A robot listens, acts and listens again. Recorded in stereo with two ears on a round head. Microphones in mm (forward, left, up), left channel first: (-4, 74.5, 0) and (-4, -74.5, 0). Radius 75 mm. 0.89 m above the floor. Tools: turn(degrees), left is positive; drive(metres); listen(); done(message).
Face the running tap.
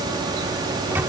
listen()
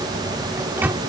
listen()
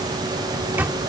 done("I can't make out a running tap, only a microwave.")